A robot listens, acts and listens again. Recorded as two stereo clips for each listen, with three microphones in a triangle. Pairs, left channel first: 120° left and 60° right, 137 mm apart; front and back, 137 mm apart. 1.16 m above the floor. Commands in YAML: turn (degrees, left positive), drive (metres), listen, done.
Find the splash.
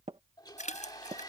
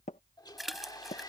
turn: 90
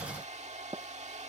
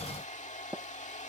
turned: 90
done: "I heard a splash from this way, but can't make it out now."